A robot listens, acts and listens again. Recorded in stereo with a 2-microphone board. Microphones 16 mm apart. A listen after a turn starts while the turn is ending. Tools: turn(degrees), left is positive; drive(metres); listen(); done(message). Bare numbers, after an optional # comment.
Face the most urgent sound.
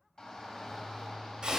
# The shout: about 50° left or 130° left.
turn(50)
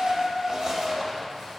# So it is at 60° left.
turn(60)
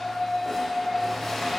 # The shout is now 10° right.
turn(-10)
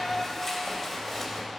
done("Found it: a shout, straight ahead, 1 to 2 m away.")